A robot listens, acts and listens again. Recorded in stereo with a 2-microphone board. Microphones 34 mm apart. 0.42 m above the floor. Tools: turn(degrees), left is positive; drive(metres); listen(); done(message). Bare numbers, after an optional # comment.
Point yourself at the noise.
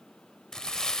# The crumpling: about 15° left or 165° left.
turn(15)
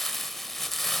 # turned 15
done("Found it: crumpling, straight ahead.")